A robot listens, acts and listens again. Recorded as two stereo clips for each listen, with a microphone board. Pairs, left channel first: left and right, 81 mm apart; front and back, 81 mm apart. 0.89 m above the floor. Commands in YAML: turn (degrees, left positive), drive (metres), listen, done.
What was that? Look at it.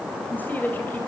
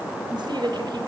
turn: 155
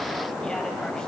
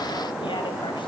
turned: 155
listen: true
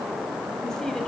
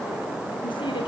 listen: true
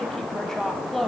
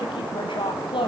done: "Facing the woman speaking, over 4 m away."